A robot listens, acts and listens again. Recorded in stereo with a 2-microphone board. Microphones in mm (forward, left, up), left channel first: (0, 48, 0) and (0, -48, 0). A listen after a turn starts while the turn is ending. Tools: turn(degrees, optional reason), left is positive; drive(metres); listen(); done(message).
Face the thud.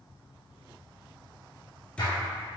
turn(degrees=30)
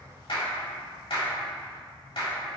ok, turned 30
listen()
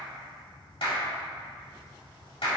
done("I heard a thud, but can't make it out now. It was about 15° right or 135° left.")